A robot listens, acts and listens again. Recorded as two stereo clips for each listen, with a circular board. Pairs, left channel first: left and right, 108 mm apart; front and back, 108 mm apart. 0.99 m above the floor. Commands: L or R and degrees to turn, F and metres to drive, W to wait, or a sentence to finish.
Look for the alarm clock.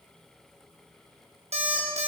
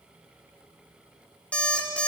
R75
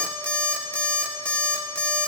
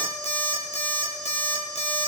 L15
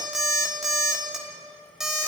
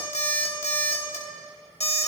Found it: an alarm clock, straight ahead.